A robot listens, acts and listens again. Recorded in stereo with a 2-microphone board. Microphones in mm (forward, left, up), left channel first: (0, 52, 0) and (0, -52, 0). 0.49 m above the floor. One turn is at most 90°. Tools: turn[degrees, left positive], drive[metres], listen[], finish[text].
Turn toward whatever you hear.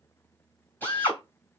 Action: turn[30]
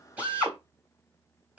Thought: So it is at 15° right.
Action: turn[-15]
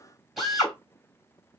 Action: finish[Found it: a drill, straight ahead, 2 to 4 m away.]